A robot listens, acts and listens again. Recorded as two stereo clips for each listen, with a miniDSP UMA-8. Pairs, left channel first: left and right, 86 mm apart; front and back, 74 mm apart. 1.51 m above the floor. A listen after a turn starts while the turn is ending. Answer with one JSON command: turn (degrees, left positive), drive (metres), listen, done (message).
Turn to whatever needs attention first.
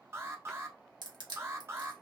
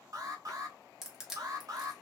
{"turn": -150}
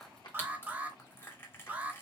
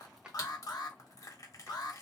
{"turn": -20}
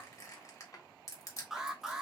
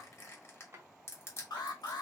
{"done": "Facing the alarm."}